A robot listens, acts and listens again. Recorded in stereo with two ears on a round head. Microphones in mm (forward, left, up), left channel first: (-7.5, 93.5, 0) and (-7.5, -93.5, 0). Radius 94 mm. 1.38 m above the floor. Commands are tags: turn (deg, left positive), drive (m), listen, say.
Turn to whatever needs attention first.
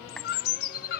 <turn deg="50"/>
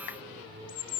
<listen/>
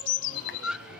<say>Found it: a scream, straight ahead.</say>